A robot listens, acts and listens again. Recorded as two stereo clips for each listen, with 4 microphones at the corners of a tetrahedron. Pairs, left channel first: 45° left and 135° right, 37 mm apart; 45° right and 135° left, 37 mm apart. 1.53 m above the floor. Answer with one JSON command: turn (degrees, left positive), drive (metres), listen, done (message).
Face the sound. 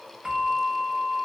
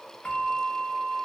{"turn": -75}
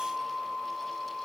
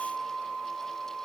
{"turn": -35}
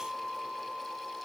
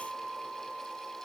{"turn": -25}
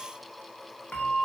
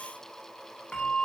{"turn": 10}
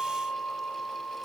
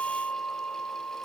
{"done": "Facing the bell, 1 to 2 m away."}